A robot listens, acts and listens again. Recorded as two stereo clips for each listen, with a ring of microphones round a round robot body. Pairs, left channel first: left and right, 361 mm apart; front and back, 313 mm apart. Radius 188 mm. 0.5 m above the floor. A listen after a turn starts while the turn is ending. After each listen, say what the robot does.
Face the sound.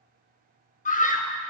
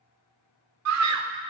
Turn 155° left.
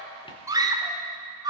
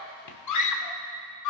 Turn 10° right.
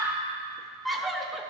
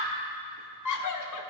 Facing the scream, 1 to 2 m away.